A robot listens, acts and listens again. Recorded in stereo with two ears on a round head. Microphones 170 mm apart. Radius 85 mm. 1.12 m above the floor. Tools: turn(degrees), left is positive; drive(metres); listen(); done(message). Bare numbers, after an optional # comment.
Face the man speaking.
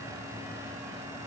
listen()
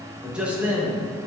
turn(-30)
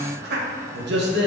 # So it is at 115° right.
turn(-115)
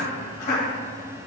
# The man speaking is now 45° left.
turn(45)
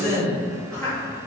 done("Facing the man speaking, 2 to 4 m away.")